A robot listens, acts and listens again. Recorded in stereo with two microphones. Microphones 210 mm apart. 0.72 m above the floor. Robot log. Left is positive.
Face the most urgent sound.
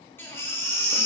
cmd yaw +30
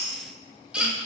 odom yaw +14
end: Found it: a baby crying, straight ahead, under 1 m away.